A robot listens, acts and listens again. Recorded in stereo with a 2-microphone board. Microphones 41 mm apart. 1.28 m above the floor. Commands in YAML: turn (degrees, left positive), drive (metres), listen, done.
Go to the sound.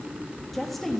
turn: 30
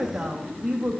turn: -25
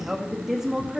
turn: -10
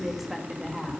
drive: 1.0
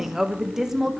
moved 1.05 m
turn: -10
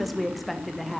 drive: 1.0
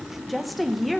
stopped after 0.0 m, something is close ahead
done: "I am next to the woman speaking."